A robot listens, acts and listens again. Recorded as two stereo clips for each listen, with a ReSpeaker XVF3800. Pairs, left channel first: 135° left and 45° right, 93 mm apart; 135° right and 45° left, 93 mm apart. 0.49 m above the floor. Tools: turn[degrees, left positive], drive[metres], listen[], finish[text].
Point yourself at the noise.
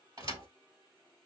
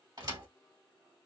Action: finish[Facing the thud.]